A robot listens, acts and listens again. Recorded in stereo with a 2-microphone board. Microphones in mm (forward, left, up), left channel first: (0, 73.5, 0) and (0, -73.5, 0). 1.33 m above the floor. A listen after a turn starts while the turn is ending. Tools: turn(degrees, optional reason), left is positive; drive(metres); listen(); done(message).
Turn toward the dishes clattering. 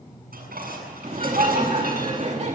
turn(degrees=-90)
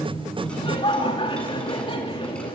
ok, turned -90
listen()
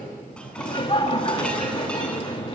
listen()
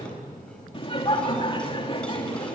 done("I heard dishes clattering from this way, but can't make it out now.")